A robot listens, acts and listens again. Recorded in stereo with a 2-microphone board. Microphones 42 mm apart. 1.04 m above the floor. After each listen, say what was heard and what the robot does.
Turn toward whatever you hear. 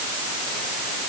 Keep listening.
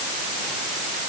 Keep listening.
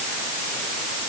I can't make out anything.